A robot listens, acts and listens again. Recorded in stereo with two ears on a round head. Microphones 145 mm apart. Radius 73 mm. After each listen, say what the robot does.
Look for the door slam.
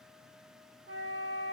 Keep listening.
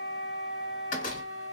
Turn 45° left.
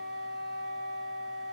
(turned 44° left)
Keep listening.
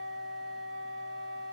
I heard a door slam, but can't make it out now. It was about straight ahead or 90° left.